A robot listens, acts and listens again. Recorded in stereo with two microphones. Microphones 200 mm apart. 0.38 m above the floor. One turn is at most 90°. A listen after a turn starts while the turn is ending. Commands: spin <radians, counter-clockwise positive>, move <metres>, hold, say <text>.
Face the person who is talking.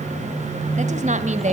spin -0.61
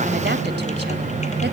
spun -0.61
hold
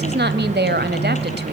spin -1.57
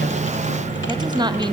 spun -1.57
spin -0.44
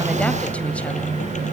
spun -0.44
hold
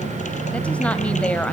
spin 0.17
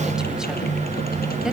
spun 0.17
hold
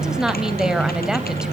say Facing the woman speaking.